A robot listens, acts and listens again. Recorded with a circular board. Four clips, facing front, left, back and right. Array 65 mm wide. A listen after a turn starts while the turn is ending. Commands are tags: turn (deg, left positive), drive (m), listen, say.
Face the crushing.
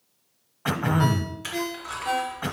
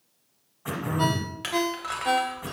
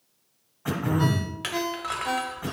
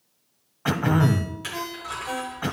<turn deg="150"/>
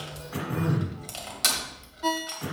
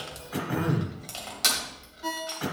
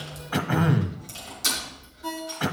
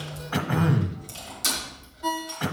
<turn deg="40"/>
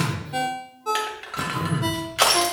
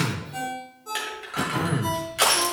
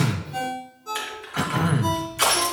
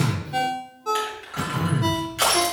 <say>Facing the crushing.</say>